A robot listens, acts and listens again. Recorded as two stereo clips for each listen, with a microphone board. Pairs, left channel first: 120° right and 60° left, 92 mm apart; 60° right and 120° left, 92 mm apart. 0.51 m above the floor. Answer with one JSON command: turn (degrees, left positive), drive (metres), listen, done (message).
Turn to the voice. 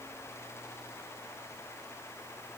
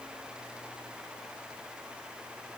{"listen": true}
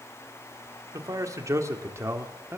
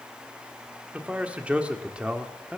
{"turn": 50}
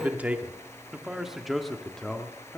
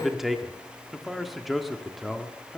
{"turn": -145}
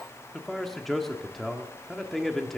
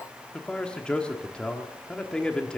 {"turn": -40}
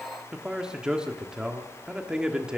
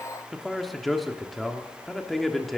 {"turn": 20}
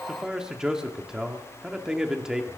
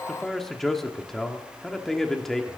{"turn": 10}
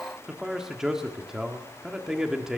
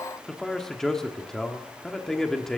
{"done": "Found it: a man speaking, straight ahead."}